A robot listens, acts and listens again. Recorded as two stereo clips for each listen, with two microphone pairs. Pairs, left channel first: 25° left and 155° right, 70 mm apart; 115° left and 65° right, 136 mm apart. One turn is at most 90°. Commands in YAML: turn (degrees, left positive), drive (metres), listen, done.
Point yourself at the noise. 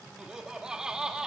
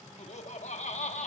turn: 90
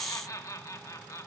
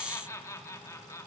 turn: 50
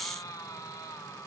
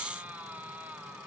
turn: 10
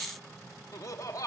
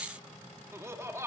done: "Found it: laughter, straight ahead."